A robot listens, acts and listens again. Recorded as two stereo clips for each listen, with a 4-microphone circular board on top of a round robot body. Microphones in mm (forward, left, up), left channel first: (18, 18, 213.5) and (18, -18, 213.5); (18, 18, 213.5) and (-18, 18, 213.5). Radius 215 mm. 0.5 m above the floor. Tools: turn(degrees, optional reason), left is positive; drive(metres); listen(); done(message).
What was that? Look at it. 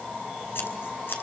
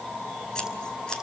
turn(degrees=70, reason="The scissors: 70° left.")
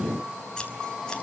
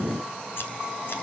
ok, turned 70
listen()
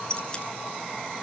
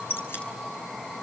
turn(degrees=20, reason="The scissors is now 20° left.")
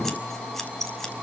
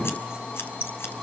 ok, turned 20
turn(degrees=10, reason="The scissors is now 10° left.")
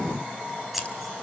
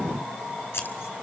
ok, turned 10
done("Found it: scissors, straight ahead.")